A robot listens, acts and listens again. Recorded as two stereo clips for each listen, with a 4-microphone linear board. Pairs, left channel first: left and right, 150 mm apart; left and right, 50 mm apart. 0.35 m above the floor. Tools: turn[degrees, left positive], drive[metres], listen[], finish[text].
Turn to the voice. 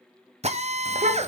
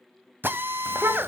Thought: The child speaking: about 55° right or 125° right.
Action: turn[-55]
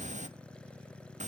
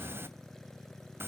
Thought: So it is at 60° right.
Action: turn[-60]
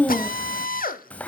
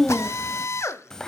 Thought: The child speaking is now 10° left.
Action: turn[10]
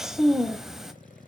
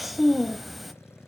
Action: finish[Found it: a child speaking, straight ahead.]